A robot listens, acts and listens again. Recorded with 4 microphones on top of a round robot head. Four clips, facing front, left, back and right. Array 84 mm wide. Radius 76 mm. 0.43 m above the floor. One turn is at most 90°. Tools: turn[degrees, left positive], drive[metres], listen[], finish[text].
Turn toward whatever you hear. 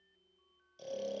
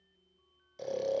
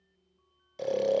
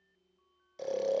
Thought: The snoring: 175° right.
Action: turn[-90]
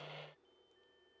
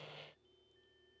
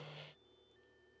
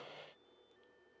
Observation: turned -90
Thought: Nothing new. It was at 85° right.
Action: turn[-85]
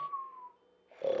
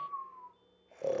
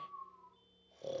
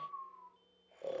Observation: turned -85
Thought: The snoring is now 25° left.
Action: turn[25]
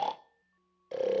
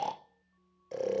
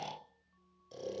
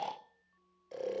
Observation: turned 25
Thought: The snoring is now 15° left.
Action: turn[15]
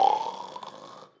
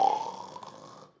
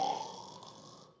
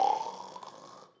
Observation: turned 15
Action: finish[Facing the snoring, under 1 m away.]